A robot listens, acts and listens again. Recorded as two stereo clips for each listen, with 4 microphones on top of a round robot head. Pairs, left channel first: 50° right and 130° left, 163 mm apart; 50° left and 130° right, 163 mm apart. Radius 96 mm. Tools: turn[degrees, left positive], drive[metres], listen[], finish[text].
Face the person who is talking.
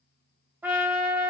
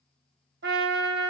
Action: listen[]
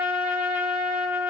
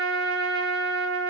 Action: listen[]
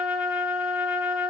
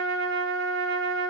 Action: finish[I can't make out anyone speaking to turn to.]